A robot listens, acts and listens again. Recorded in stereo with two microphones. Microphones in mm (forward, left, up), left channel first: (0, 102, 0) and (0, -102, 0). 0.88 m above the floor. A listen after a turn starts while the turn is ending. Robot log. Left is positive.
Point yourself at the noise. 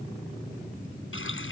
cmd yaw +90
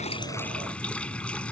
end: Found it: a running tap, straight ahead.